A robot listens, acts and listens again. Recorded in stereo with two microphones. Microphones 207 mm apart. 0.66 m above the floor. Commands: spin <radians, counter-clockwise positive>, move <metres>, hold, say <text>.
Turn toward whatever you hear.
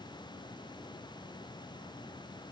hold
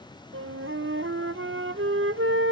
spin -1.57
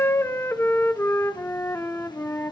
spin 0.17
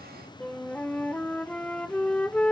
say Found it: a flute, straight ahead.